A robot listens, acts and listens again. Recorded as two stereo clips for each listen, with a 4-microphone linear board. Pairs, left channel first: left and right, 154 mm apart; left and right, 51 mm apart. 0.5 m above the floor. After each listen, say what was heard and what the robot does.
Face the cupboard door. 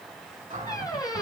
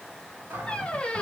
The cupboard door: about 50° right or 130° right. Turn 50° right.
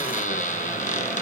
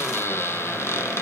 Keep listening.
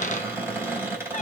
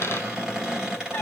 So it is at 20° right. Turn 20° right.
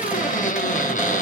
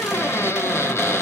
Keep listening.
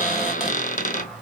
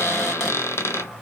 Facing the cupboard door, 2 to 4 m away.